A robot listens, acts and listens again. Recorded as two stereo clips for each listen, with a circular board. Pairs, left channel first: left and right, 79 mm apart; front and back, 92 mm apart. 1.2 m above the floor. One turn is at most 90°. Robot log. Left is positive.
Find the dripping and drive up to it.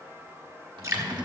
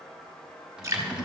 note: The dripping: 130° right.
cmd yaw -90
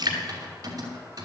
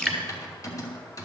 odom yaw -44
note: The dripping is now 80° right.
cmd yaw -80
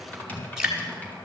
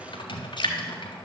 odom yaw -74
note: The dripping is now 10° right.
cmd yaw -10
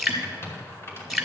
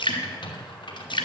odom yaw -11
cmd fwd 1.0
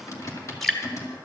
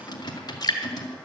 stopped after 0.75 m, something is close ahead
end: I am next to the dripping.